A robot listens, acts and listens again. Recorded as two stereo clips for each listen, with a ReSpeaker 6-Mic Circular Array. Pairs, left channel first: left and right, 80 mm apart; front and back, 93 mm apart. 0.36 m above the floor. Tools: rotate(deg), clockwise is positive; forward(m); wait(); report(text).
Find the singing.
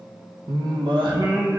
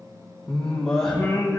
rotate(85)
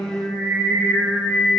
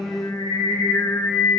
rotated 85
rotate(40)
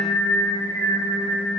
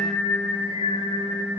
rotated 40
report("Facing the singing, over 4 m away.")